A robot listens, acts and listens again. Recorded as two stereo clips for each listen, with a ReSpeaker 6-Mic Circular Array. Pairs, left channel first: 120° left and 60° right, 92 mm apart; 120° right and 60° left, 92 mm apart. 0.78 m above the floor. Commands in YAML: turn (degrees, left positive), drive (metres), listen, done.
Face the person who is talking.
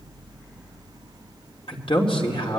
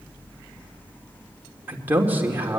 turn: 130
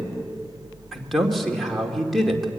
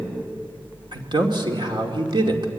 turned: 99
turn: 30
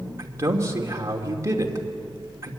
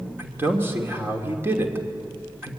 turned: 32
done: "Facing the man speaking, 2 to 4 m away."